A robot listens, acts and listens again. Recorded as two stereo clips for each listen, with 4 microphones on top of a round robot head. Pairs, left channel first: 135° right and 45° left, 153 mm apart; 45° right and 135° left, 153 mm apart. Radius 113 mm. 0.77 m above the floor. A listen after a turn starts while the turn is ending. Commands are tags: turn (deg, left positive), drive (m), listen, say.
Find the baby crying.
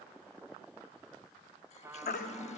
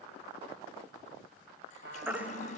<turn deg="-145"/>
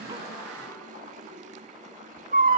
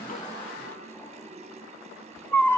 <turn deg="30"/>
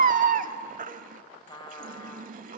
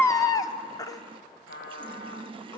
<turn deg="20"/>
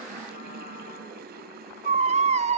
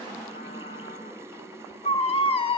<say>Facing the baby crying.</say>